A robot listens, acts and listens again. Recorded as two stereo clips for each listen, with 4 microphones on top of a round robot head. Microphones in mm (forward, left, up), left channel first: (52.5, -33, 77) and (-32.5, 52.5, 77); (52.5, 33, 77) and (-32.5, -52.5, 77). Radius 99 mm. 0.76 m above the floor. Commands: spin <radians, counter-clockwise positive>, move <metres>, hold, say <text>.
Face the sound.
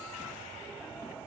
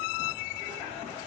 hold
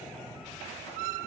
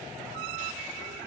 hold
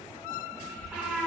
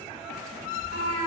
spin 0.79
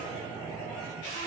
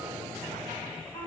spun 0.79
hold
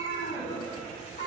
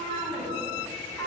spin -0.35
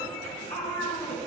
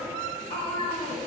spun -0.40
say Facing the cat meowing, 2 to 4 m away.